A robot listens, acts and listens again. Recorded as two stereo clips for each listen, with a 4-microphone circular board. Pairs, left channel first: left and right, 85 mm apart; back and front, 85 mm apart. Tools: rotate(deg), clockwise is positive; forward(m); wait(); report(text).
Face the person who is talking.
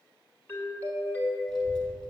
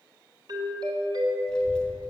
rotate(105)
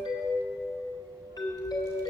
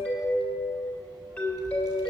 rotate(45)
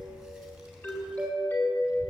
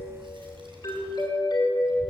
rotate(10)
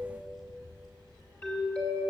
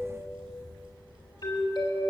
report("Found it: a child speaking, straight ahead.")